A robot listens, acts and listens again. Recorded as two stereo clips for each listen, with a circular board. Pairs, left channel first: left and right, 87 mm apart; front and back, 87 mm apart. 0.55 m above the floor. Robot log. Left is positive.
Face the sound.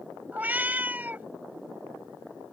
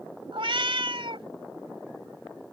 note: The cat meowing: 160° right.
cmd yaw -160
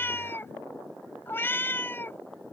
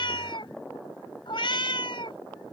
note: The cat meowing is now 25° left.
cmd yaw +25
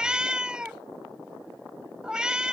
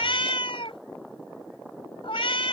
note: The cat meowing is now 10° right.
cmd yaw -10
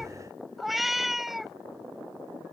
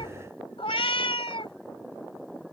end: Facing the cat meowing.